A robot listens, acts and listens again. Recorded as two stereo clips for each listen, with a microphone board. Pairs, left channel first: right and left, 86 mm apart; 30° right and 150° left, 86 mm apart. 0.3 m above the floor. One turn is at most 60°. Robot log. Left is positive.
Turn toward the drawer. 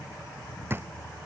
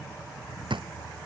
note: The drawer: 155° left.
cmd yaw +60
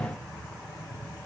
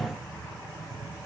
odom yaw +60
note: Nothing new. It was at 95° left.
cmd yaw +60
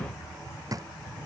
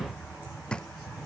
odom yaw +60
note: The drawer is now 50° left.
cmd yaw +50
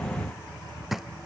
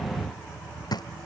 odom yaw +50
end: Facing the drawer.